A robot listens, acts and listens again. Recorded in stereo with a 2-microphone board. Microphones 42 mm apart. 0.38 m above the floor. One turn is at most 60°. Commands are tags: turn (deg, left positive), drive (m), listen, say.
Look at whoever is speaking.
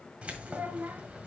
<turn deg="-50"/>
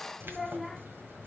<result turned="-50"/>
<say>Found it: a child speaking, straight ahead, 1 to 2 m away.</say>